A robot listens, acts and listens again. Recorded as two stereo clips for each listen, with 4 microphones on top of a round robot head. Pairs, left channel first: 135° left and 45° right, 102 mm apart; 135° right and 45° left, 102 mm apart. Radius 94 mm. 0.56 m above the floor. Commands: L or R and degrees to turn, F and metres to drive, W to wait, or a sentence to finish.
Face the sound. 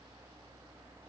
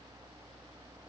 W
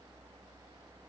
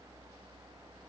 W
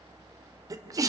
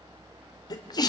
R95
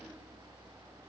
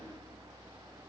Facing where the sneeze came from. I can't hear it now.